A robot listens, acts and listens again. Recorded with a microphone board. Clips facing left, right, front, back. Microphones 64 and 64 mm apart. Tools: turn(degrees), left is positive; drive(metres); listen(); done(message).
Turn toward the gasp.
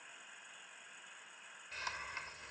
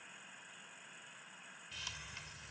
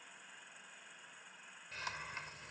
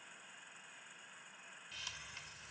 listen()
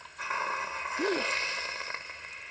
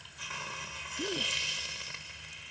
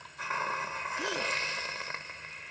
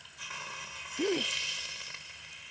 turn(degrees=125)
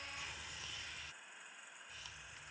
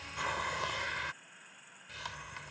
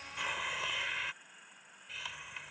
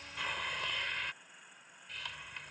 done("Facing where the gasp came from. I can't hear it now.")